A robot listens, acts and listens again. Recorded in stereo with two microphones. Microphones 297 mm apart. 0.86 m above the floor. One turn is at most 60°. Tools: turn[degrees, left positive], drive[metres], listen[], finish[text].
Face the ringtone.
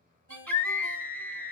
Thought: The ringtone: about 50° left or 130° left.
Action: turn[50]
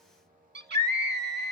Action: listen[]
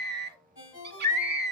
Thought: So it is at 85° left.
Action: turn[60]
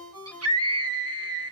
Thought: The ringtone is now 15° left.
Action: turn[15]
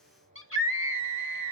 Action: listen[]
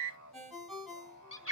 Action: finish[Found it: a ringtone, straight ahead.]